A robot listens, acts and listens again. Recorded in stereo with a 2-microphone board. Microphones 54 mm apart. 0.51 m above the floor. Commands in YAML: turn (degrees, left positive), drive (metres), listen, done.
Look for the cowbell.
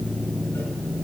listen: true
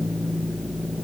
listen: true
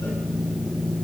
done: "I can't make out a cowbell."